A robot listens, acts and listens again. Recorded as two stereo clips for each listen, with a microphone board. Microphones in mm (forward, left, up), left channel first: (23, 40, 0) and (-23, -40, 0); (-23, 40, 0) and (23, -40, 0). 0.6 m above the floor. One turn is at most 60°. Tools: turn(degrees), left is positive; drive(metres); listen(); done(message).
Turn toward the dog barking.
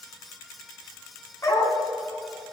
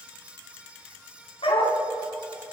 turn(degrees=60)
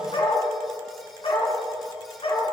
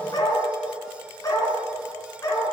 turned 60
turn(degrees=60)
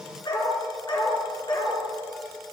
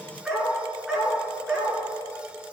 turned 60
turn(degrees=20)
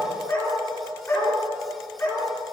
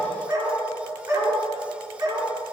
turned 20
done("Facing the dog barking.")